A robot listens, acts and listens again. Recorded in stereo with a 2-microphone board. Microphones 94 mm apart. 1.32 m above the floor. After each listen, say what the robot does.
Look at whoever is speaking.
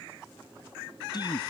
Turn 45° left.
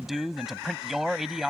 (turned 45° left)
Found it: a man speaking, straight ahead.